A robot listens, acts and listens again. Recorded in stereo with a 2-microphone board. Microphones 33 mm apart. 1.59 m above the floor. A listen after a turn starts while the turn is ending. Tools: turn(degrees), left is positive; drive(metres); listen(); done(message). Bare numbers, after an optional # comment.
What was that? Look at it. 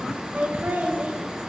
# The laughter: about 60° right or 120° right.
turn(-60)
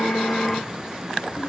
listen()
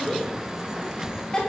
# So it is at 20° left.
turn(20)
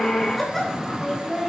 # The laughter is now 10° left.
turn(10)
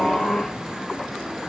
listen()
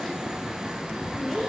done("Found it: laughter, straight ahead.")